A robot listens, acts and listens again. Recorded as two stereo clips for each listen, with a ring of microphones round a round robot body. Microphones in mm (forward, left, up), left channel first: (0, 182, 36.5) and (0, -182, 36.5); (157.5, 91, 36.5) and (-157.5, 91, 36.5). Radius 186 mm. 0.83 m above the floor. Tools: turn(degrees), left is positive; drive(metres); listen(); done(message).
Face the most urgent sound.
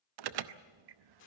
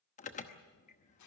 turn(degrees=-70)
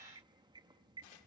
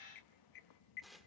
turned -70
turn(degrees=-10)
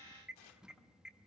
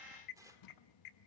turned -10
done("Facing the alarm, under 1 m away.")